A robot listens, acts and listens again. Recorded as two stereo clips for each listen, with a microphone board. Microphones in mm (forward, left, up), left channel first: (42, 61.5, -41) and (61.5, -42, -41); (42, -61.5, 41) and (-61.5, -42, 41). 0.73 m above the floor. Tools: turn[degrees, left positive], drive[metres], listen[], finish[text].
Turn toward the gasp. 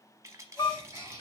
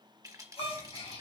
Thought: The gasp: 15° right.
Action: turn[-15]
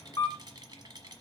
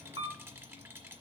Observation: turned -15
Action: finish[Facing where the gasp came from. I can't hear it now.]